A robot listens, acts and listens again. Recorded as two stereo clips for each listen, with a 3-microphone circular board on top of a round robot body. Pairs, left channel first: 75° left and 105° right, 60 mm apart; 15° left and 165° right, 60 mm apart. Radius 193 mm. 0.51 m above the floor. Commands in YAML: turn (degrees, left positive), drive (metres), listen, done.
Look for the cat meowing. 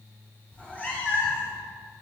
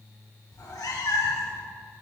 turn: 20
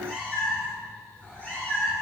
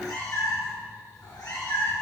turn: 20
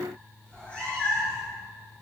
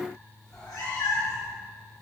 turn: 15
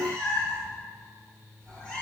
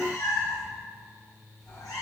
done: "Found it: a cat meowing, straight ahead, over 4 m away."